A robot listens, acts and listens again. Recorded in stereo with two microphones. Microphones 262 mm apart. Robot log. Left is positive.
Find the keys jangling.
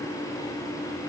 cmd idle
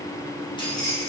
cmd yaw +30
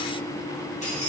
note: The keys jangling: about 25° left or 155° left.
cmd yaw +25
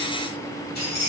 note: So it is at 145° left.
cmd yaw +145
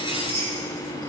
note: The keys jangling is now 20° right.
cmd yaw -20
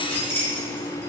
note: The keys jangling is now 10° left.
cmd yaw +10
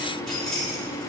end: Facing the keys jangling, 2 to 4 m away.